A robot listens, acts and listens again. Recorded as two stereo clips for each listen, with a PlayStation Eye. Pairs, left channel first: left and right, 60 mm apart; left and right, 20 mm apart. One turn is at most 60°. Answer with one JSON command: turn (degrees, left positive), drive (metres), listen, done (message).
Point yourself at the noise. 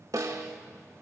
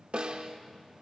{"turn": -60}
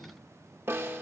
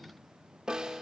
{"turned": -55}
{"turn": -40}
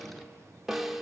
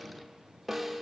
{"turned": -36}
{"done": "Facing the snare drum."}